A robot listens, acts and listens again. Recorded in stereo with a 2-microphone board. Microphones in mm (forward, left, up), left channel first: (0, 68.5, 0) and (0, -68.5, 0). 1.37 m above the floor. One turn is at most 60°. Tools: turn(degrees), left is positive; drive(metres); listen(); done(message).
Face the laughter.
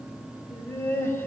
turn(degrees=15)
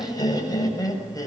turn(degrees=25)
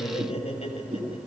turn(degrees=60)
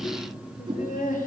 turn(degrees=60)
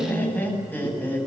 turn(degrees=15)
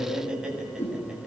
done("Facing the laughter.")